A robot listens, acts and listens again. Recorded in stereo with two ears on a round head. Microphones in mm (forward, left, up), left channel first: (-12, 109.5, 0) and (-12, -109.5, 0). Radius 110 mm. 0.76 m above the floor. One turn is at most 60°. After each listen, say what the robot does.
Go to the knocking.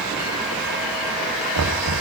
Turn 60° right.
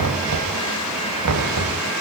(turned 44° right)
Turn 60° right.
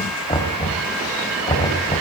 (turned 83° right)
Turn 20° left.
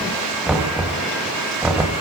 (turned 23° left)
Drive 1.0 m forward.
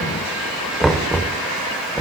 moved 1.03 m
Drive 1.0 m forward.
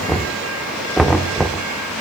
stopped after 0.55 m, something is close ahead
Arrived at the knocking, straight ahead.